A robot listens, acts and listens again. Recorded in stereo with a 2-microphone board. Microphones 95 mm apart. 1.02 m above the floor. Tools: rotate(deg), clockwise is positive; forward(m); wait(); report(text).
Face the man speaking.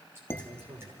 rotate(75)
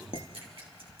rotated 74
wait()
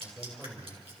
report("Facing the man speaking.")